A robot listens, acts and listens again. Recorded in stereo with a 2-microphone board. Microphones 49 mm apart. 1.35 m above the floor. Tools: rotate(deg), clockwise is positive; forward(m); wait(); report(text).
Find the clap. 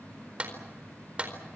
rotate(25)
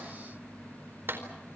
rotate(130)
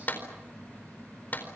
rotate(-35)
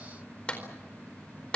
rotate(-20)
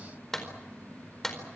report("Facing the clap.")